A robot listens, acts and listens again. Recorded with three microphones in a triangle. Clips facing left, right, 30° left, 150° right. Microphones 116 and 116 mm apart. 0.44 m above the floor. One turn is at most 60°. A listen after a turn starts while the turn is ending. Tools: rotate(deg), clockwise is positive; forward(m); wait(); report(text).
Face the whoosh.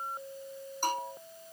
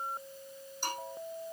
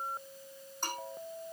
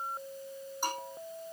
wait()
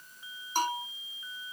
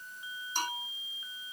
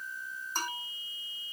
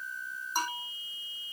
wait()
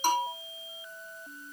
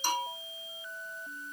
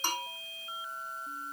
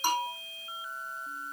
report("I can't make out a whoosh, only a bell.")